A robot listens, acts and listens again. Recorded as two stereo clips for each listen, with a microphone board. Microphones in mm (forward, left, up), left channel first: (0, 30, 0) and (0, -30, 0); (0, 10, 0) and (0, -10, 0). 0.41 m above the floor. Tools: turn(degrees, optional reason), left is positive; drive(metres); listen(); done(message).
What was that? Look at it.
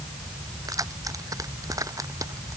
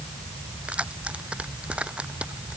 turn(degrees=-90)
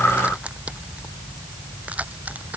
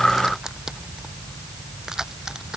turn(degrees=-25, reason="So it is at 25° right.")
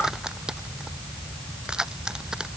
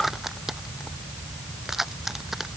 turn(degrees=-15, reason="The keys jangling is now 15° right.")
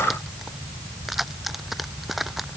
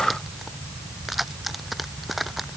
done("Found it: keys jangling, straight ahead.")